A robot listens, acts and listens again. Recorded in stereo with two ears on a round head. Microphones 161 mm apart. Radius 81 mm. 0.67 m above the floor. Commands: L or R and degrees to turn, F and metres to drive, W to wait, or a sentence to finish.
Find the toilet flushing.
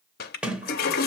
L55
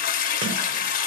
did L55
L55
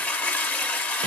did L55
L10
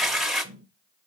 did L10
Found it: a toilet flushing, straight ahead.